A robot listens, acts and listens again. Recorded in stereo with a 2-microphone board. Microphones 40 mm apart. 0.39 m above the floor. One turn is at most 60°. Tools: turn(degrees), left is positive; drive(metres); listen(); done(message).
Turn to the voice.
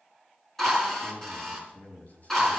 turn(degrees=40)
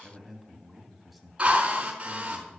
done("Facing the man speaking, 2 to 4 m away.")